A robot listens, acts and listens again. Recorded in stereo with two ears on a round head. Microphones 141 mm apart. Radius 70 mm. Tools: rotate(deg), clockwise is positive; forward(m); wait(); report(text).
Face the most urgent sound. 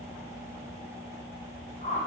wait()
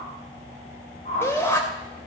rotate(-15)
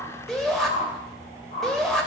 report("Found it: a shout, straight ahead.")